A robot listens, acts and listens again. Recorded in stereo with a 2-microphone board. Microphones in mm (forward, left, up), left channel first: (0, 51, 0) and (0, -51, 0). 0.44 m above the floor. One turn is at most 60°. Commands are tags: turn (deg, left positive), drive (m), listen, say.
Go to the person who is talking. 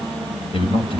<turn deg="60"/>
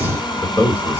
<turn deg="25"/>
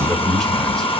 <drive m="1.0"/>
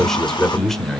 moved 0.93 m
<drive m="1.0"/>
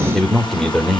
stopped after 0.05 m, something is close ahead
<say>Arrived at the man speaking, straight ahead.</say>